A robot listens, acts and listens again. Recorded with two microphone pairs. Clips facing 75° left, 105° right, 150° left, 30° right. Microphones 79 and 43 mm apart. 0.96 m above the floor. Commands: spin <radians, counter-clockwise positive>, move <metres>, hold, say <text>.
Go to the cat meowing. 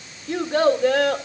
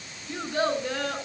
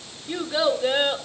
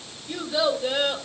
hold
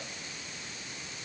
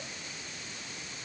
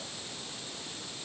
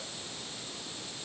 hold
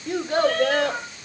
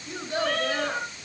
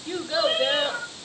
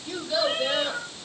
spin 2.09
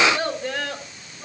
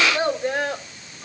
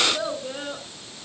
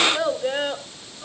move 1.0
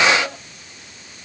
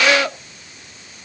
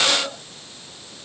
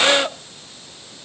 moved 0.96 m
hold
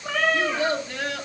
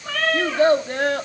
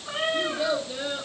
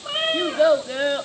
move 1.0
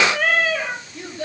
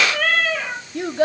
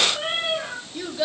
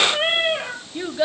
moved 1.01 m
move 1.0
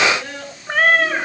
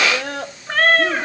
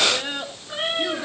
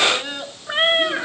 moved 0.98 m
move 1.0
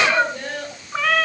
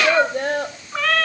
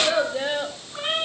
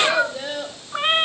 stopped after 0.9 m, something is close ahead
say Arrived at the cat meowing, straight ahead.